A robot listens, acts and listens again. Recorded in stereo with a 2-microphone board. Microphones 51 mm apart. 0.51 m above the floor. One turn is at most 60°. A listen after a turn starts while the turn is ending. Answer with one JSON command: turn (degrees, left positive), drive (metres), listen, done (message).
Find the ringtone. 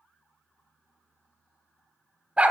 {"listen": true}
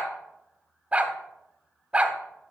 {"listen": true}
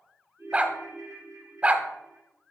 {"turn": -60}
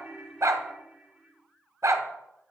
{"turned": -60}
{"turn": -15}
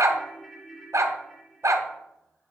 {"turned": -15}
{"done": "Facing the ringtone, 2 to 4 m away."}